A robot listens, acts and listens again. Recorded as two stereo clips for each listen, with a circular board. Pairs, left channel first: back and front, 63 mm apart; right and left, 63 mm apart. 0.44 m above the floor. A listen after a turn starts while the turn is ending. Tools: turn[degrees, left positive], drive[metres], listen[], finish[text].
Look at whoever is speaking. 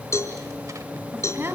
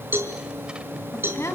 Thought: The woman speaking: 50° right.
Action: turn[-50]
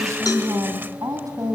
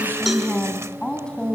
Thought: The woman speaking is now 15° right.
Action: turn[-15]
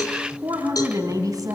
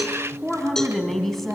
Action: finish[Found it: a woman speaking, straight ahead.]